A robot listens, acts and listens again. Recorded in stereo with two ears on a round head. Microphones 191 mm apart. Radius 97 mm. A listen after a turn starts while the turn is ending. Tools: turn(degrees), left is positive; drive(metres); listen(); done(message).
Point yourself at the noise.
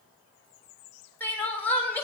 turn(degrees=30)
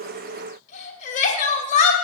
turn(degrees=140)
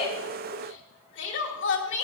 turn(degrees=60)
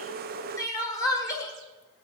turn(degrees=15)
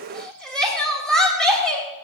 done("Found it: crying, straight ahead, 2 to 4 m away.")